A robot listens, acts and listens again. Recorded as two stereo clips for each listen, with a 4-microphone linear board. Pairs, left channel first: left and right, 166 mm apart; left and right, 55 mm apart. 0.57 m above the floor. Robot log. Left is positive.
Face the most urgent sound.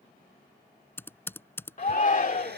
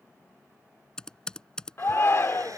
note: The shout: about 50° left or 130° left.
cmd yaw +50
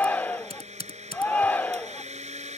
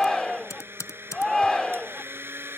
note: So it is at 10° left.
cmd yaw +10
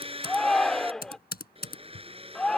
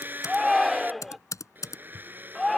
end: Found it: a shout, straight ahead.